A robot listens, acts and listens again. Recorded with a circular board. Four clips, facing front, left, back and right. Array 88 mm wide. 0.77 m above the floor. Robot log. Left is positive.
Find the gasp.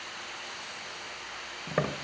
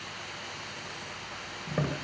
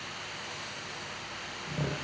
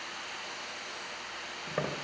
cmd idle
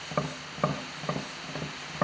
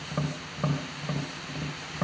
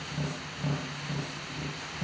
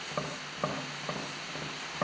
cmd idle
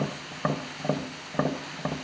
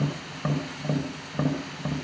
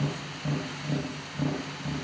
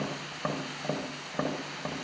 end: I can't make out a gasp, only tapping.